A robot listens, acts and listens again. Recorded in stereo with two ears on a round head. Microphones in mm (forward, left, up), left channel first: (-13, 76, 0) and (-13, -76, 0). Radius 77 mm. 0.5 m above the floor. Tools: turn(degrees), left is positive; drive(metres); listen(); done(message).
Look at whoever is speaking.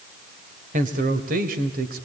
turn(degrees=-55)
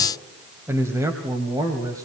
turn(degrees=-20)
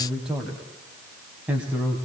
turn(degrees=-10)
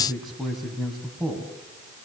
done("Found it: a man speaking, straight ahead.")